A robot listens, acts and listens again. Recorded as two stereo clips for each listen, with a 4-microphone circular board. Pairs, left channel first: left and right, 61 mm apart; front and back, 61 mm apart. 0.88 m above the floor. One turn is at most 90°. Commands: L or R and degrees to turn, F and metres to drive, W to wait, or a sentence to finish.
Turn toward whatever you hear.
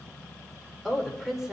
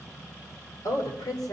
Found it: a woman speaking, straight ahead.